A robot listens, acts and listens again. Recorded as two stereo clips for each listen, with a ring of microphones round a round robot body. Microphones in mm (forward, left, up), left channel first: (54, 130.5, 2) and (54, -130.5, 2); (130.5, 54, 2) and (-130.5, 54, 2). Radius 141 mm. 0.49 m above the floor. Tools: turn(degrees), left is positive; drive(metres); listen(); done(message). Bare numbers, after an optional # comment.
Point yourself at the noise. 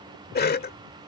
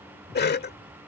# The cough: 45° left.
turn(45)
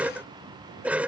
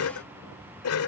done("Facing the cough.")